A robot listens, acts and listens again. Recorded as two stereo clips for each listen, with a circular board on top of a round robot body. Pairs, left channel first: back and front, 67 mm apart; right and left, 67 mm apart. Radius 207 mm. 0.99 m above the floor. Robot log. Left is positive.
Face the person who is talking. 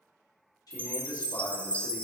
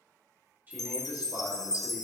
note: The man speaking: 150° left.
cmd yaw +150
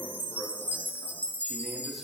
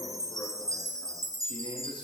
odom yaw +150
cmd idle
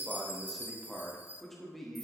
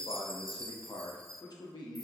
note: The man speaking is now 95° right.
cmd yaw -95
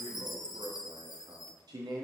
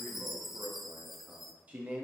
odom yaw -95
note: The man speaking is now 20° left.
cmd yaw +20
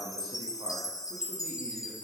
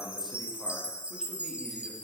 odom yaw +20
cmd idle
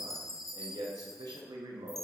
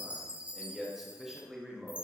end: Found it: a man speaking, straight ahead.